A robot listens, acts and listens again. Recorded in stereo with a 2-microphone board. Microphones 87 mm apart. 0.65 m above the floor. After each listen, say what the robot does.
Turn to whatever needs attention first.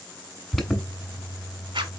Turn 30° left.
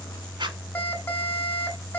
Turn 150° left.
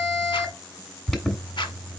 Facing the alarm, 1 to 2 m away.